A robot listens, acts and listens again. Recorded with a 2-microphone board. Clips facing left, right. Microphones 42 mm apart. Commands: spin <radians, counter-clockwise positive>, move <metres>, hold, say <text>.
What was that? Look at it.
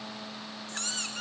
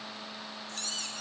spin 1.22
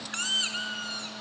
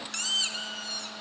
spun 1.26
spin 0.61
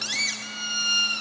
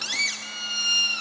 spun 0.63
say Found it: a squeak, straight ahead, 1 to 2 m away.